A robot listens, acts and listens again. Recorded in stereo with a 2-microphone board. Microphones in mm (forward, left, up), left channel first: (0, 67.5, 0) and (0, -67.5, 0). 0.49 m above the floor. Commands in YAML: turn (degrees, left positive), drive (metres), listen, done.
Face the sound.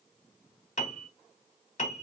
turn: 55
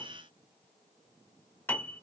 turn: 15
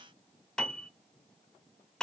done: "Facing the piano."